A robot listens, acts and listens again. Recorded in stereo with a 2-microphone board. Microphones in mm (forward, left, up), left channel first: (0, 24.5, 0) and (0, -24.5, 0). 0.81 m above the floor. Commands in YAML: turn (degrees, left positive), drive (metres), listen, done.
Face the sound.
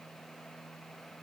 listen: true
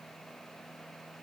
listen: true
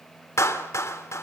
turn: 65
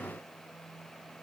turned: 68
listen: true
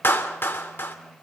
turn: 45
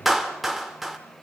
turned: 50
done: "Facing the clap."